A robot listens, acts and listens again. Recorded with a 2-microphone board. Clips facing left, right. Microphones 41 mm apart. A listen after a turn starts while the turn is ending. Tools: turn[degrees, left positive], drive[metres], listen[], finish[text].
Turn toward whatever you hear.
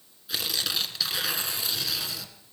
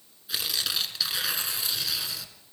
Action: turn[30]
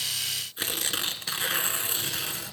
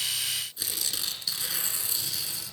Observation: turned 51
Thought: So it is at 130° left.
Action: turn[130]
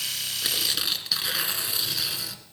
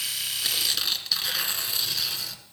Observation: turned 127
Action: finish[Facing the tearing paper, 1 to 2 m away.]